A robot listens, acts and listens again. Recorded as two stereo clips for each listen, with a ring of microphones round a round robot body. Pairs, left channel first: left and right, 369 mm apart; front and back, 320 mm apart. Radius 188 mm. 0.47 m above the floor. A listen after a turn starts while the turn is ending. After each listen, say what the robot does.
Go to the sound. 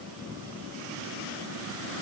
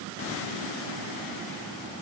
Keep listening.
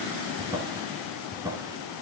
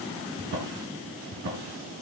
Turn 170° right.
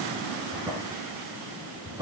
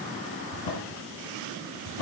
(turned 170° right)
Turn 10° right.
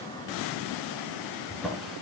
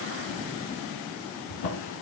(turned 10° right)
Drive 1.0 m forward.
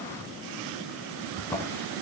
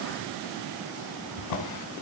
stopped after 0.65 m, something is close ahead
Something is in my way. I am facing the drawer but have not reached it.